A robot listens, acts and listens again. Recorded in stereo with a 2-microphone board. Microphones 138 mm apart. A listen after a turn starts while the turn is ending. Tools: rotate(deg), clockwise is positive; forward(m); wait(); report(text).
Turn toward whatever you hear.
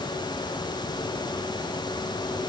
wait()
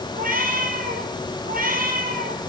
rotate(90)
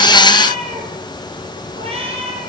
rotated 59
rotate(40)
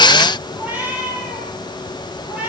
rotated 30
rotate(15)
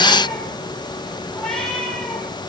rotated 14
wait()
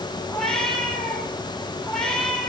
report("Found it: a cat meowing, straight ahead, over 4 m away.")